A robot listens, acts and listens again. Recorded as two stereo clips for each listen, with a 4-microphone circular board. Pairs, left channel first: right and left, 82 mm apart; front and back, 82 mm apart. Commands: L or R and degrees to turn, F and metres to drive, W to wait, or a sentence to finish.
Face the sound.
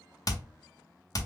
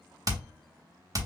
R135
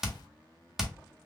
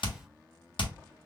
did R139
Facing the hammering.